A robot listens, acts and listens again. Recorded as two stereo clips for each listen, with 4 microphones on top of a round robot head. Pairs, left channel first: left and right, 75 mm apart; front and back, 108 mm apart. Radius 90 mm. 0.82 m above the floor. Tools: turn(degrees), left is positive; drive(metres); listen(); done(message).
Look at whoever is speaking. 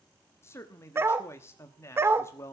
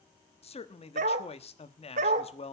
turn(degrees=30)
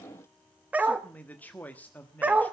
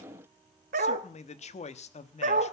turn(degrees=15)
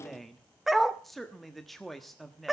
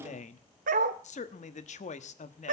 done("Facing the man speaking.")